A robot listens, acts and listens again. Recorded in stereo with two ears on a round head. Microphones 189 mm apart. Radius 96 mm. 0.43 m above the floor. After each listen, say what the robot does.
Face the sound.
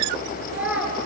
Turn 30° right.
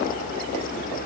Keep listening.
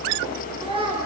Turn 155° right.
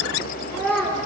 Facing the child speaking, 2 to 4 m away.